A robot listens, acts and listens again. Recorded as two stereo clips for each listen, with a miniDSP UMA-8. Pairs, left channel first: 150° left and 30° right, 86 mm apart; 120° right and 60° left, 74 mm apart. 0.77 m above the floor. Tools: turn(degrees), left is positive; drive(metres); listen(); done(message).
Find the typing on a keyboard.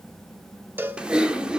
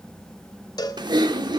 turn(degrees=50)
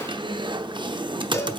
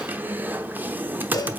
done("Facing the typing on a keyboard, under 1 m away.")